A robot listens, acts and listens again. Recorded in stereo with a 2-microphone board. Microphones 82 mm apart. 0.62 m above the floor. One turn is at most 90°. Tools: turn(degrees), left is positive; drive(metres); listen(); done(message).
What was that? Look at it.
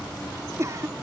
turn(degrees=-35)
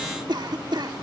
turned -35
turn(degrees=-90)
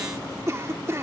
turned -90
turn(degrees=-40)
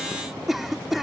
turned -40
done("Facing the cough.")